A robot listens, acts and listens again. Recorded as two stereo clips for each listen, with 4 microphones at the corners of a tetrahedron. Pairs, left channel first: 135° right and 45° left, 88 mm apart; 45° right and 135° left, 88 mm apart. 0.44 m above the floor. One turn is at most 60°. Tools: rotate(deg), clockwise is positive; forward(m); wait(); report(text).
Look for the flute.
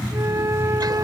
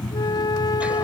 rotate(10)
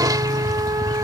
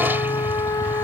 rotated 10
report("Found it: a flute, straight ahead.")